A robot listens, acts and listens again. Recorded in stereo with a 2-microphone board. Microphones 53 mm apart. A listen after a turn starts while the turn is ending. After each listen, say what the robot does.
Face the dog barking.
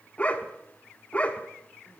Turn 25° left.
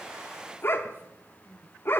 Turn 125° left.
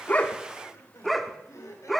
Found it: a dog barking, straight ahead.